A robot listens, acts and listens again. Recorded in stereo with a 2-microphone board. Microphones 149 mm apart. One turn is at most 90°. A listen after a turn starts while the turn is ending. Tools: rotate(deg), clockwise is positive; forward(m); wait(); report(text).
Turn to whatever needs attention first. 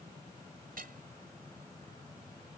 wait()
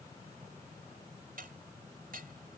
wait()
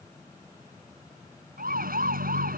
rotate(75)
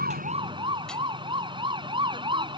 rotate(35)
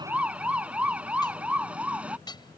rotate(10)
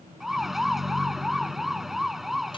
report("Found it: a siren, straight ahead.")